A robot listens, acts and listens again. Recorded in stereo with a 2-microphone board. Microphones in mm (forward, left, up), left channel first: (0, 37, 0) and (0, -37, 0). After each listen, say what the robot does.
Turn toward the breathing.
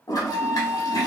Keep listening.
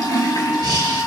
Turn 65° right.
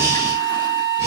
Turn 45° right.
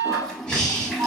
Turn 10° left.
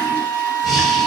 Found it: breathing, straight ahead, under 1 m away.